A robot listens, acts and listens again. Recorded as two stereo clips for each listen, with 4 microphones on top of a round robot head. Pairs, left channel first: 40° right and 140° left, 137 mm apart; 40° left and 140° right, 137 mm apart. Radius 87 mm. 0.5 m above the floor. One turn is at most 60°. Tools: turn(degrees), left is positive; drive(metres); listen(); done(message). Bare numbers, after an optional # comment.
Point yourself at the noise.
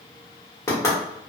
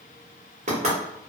# The knocking: 110° right.
turn(-60)
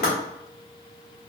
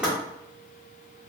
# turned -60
# The knocking is now 55° right.
turn(-55)
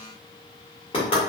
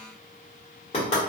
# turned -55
done("Facing the knocking.")